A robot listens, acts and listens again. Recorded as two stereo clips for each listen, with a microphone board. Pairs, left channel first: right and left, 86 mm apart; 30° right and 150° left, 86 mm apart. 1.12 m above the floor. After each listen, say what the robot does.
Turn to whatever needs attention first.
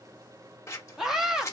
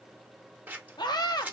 Found it: a scream, straight ahead, 1 to 2 m away.